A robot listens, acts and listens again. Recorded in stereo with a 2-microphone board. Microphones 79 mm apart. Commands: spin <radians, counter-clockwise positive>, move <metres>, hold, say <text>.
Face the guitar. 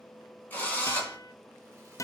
spin 0.70
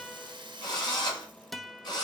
say Found it: a guitar, straight ahead, under 1 m away.